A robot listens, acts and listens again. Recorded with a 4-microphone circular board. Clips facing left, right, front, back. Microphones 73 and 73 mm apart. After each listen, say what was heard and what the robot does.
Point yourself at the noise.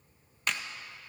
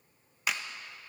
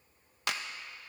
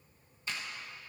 Facing the clap, under 1 m away.